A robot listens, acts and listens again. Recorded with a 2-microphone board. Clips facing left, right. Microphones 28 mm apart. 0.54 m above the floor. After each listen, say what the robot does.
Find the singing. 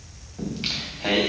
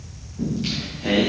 Turn 45° left.
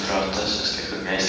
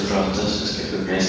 Turn 105° left.
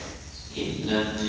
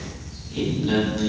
Found it: singing, straight ahead.